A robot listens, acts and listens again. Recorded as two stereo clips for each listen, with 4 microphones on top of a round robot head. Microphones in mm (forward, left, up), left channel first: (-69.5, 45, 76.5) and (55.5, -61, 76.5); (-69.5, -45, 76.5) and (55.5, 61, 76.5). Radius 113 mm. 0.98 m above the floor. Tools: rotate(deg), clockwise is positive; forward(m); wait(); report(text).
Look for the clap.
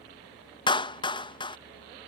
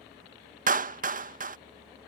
rotate(-80)
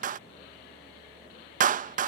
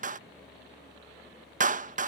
report("Found it: a clap, straight ahead.")